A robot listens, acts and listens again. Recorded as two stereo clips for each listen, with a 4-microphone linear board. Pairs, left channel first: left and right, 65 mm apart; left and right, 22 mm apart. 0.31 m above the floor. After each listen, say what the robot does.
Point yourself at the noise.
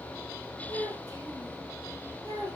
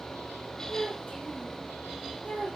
Turn 70° left.
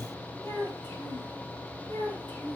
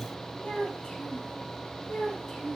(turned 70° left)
Turn 25° left.
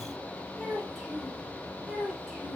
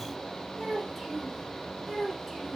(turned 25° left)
Found it: a child speaking, straight ahead, over 4 m away.